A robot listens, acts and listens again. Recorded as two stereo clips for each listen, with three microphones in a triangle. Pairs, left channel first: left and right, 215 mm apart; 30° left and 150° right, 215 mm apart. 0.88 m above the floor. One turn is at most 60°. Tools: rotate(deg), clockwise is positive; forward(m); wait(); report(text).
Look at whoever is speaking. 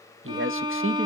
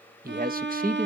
rotate(60)
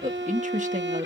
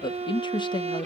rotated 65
rotate(40)
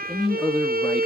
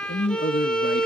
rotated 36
report("Found it: a man speaking, straight ahead.")